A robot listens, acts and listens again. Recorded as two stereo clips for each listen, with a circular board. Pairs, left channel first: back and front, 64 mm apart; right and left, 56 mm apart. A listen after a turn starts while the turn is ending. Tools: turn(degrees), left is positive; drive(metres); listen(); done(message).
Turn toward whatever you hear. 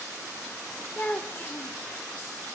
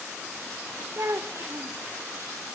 turn(degrees=120)
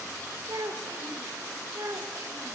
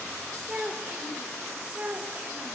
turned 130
turn(degrees=30)
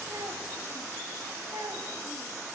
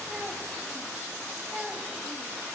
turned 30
turn(degrees=10)
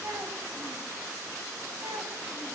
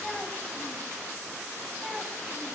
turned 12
listen()
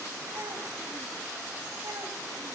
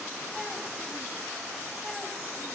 listen()
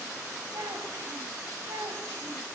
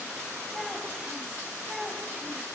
done("Facing the child speaking, 2 to 4 m away.")